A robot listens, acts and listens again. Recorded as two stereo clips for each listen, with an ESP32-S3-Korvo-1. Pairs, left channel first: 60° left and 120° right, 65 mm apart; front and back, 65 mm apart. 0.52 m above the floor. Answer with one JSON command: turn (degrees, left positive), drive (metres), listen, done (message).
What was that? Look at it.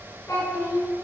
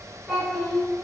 {"turn": 95}
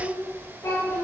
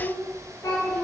{"turn": 25}
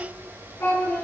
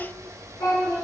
{"turn": 20}
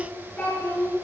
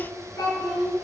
{"done": "Found it: a child speaking, straight ahead."}